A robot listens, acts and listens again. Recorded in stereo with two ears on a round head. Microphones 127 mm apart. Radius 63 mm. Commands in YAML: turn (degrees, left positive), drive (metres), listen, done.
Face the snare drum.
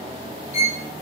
listen: true
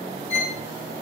listen: true
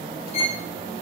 done: "I can't make out a snare drum, only a violin."